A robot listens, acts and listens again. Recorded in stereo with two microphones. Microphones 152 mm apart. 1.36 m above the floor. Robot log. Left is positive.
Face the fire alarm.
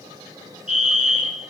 note: The fire alarm: about 55° right or 125° right.
cmd yaw -55
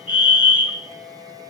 note: So it is at 10° right.
cmd yaw -10
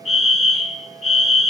end: Facing the fire alarm, 2 to 4 m away.